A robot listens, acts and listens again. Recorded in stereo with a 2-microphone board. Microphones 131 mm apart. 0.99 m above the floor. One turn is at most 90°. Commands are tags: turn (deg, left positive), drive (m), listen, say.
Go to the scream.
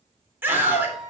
<turn deg="-15"/>
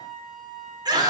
<turn deg="-90"/>
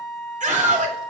<turn deg="-75"/>
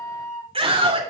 <turn deg="-45"/>
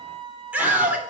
<turn deg="-10"/>
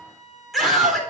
<drive m="1.0"/>
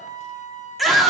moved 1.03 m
<drive m="1.0"/>
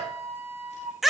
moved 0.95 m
<drive m="1.0"/>
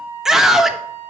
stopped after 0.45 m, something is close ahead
<say>I am next to the scream.</say>